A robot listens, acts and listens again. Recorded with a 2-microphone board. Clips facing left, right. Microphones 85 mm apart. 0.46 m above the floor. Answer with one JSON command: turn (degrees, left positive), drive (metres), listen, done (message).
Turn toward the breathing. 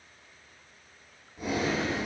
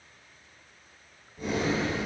{"turn": 30}
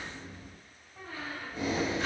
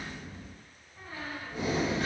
{"turn": -20}
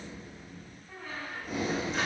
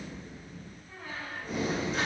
{"done": "Found it: breathing, straight ahead, 1 to 2 m away."}